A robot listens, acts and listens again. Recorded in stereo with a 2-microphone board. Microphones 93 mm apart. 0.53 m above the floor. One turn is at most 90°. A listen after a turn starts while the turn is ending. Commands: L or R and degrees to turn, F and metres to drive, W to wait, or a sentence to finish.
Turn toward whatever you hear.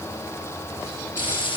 L60
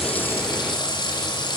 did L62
L55
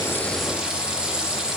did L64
Found it: frying, straight ahead.